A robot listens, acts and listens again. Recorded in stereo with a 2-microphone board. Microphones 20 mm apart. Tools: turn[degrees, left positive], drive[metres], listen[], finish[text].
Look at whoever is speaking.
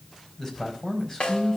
Thought: The man speaking: about 30° left or 150° left.
Action: turn[30]
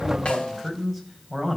Action: finish[Facing the man speaking, over 4 m away.]